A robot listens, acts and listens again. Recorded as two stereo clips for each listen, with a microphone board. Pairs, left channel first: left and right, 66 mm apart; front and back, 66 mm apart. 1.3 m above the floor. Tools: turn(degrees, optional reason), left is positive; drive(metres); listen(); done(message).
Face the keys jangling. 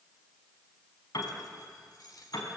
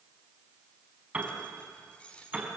turn(degrees=70, reason="The keys jangling: 70° left.")
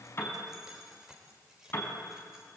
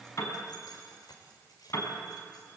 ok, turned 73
done("Found it: keys jangling, straight ahead.")